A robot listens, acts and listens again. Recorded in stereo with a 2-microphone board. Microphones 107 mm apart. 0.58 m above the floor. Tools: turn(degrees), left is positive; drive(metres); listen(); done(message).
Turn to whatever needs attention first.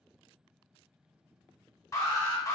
turn(degrees=30)
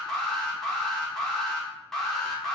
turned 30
done("Found it: an alarm, straight ahead, under 1 m away.")